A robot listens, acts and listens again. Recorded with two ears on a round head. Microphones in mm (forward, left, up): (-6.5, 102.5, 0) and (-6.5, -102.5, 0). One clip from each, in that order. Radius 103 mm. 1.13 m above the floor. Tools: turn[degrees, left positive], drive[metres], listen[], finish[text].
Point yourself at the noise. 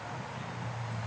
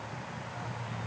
Action: listen[]
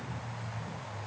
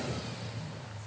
Action: listen[]
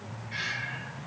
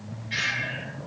Action: turn[-90]
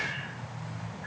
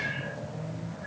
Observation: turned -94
Action: listen[]
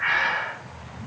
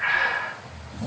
Thought: The breathing is now 10° left.
Action: turn[10]
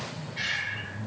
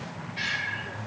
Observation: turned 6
Action: finish[Facing the breathing.]